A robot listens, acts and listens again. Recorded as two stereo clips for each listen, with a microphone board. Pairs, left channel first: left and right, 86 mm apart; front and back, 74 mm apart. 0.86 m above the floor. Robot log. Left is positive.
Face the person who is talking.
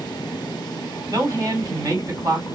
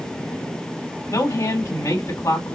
note: The woman speaking: 45° right.
cmd yaw -45
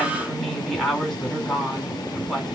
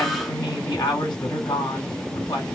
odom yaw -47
end: Facing the woman speaking, 2 to 4 m away.